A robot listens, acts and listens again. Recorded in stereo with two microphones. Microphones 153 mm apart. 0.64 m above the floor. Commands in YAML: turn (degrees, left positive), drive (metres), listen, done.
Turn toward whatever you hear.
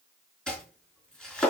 turn: 30
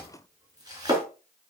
turn: -25
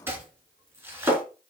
turn: -15
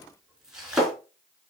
done: "Facing the chopping, over 4 m away."